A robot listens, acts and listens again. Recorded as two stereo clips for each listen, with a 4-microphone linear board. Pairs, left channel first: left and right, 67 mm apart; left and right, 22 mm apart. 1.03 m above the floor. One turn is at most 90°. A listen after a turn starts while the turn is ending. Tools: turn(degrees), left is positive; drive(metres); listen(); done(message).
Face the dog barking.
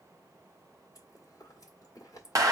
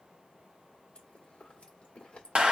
listen()
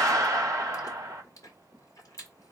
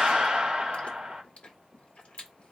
listen()
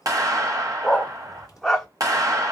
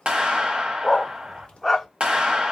turn(degrees=30)
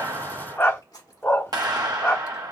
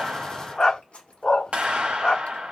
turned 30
turn(degrees=90)
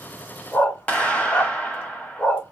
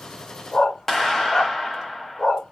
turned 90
turn(degrees=30)
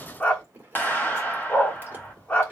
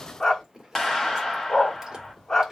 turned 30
turn(degrees=25)
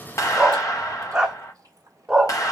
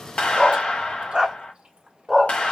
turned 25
turn(degrees=-10)
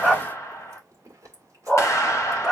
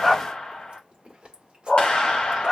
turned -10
done("Facing the dog barking, under 1 m away.")